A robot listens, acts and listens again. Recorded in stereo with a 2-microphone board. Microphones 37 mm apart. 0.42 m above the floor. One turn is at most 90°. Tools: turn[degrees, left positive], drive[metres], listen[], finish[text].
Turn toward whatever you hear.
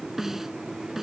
Action: turn[-30]
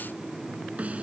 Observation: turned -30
Thought: So it is at 140° right.
Action: turn[-90]
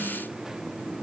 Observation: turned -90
Thought: Nothing new. It was at 50° right.
Action: turn[-50]
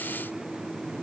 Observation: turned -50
Action: listen[]
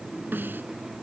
Thought: The snare drum is now 60° right.
Action: turn[-60]
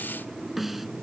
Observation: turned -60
Action: finish[Found it: a snare drum, straight ahead.]